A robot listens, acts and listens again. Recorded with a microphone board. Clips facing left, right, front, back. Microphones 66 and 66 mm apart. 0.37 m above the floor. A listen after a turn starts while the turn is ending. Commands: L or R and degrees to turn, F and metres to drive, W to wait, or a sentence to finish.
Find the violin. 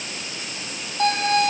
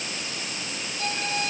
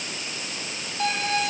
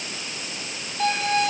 L90
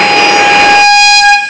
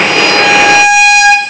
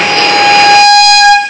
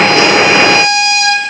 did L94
Found it: a violin, straight ahead, 2 to 4 m away.